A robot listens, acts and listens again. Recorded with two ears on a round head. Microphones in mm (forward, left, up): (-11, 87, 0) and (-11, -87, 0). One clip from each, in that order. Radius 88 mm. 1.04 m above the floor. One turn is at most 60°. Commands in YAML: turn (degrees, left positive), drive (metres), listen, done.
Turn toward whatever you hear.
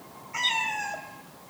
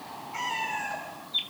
turn: 35
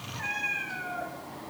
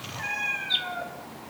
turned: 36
done: "Facing the cat meowing, 2 to 4 m away."